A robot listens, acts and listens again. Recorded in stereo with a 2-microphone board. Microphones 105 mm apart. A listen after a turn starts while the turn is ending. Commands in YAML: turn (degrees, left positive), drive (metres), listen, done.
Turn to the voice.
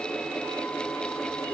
listen: true
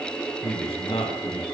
turn: 65
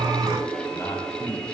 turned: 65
listen: true
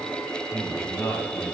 turn: 25
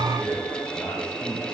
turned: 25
listen: true
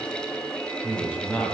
turn: 15
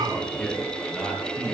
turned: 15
done: "Facing the man speaking, 2 to 4 m away."